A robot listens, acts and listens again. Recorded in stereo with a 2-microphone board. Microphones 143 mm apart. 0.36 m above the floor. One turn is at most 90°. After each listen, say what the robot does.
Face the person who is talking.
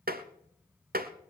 Keep listening.
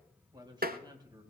Turn 25° right.
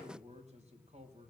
Turn 90° right.
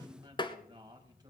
Turn 30° right.
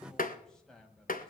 Found it: a man speaking, straight ahead, 2 to 4 m away.